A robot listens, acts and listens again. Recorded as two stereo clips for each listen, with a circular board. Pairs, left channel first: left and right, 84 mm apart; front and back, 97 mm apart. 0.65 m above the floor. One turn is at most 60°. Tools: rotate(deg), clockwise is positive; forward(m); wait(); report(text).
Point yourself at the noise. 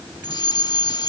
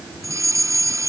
rotate(-60)
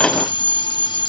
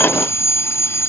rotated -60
rotate(-60)
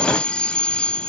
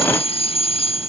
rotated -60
rotate(-10)
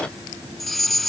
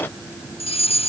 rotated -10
report("Found it: a fire alarm, straight ahead.")